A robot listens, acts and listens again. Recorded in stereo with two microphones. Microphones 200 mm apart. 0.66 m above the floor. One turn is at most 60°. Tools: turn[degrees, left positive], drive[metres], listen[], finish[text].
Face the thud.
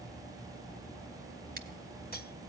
Action: listen[]
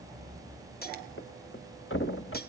Action: turn[60]
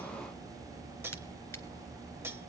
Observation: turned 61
Thought: Nothing new. It was at 30° left.
Action: turn[30]
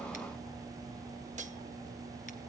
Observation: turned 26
Action: finish[I heard a thud from this way, but can't make it out now.]